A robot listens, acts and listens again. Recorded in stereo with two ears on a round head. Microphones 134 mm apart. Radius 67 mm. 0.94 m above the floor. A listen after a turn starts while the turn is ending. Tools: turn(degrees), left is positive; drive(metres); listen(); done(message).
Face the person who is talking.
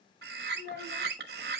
turn(degrees=65)
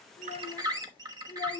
turn(degrees=25)
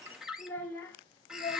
turn(degrees=25)
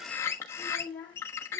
turn(degrees=15)
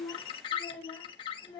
turn(degrees=10)
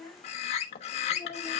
done("Facing the child speaking, 2 to 4 m away.")